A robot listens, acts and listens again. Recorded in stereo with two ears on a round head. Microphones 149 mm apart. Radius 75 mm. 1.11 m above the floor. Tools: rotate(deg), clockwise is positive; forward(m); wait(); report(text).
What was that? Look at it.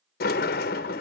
rotate(-60)
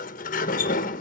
rotate(-55)
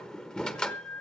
report("Found it: a sliding door, straight ahead, 1 to 2 m away.")